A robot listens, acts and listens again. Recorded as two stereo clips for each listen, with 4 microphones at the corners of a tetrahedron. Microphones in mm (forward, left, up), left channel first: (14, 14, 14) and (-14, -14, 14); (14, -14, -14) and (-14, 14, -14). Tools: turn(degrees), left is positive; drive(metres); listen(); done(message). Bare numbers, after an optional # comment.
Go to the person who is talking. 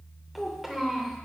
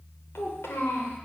# The child speaking: 55° right.
turn(-55)
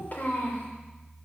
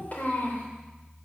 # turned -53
drive(1.0)
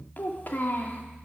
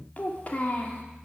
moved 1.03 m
drive(1.0)
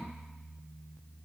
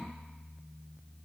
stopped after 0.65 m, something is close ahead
listen()
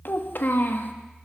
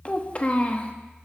# The child speaking is now 15° left.
turn(15)
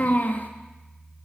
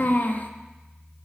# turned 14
done("I am next to the child speaking.")